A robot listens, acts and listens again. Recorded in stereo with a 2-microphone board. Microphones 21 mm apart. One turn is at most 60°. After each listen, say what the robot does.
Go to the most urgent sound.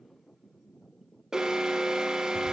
Turn 25° right.
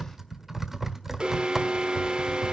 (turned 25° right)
Turn 60° right.
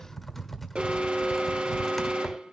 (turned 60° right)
Turn 60° right.
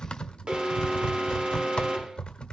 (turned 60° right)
Turn 60° right.
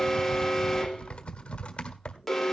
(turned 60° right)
Turn 10° left.
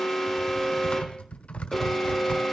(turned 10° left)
Drive 1.0 m forward.
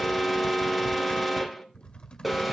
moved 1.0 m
Drive 1.0 m forward.
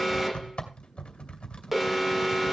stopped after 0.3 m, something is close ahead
Turn 15° right.
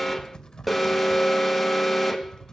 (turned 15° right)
Arrived at the alarm, straight ahead.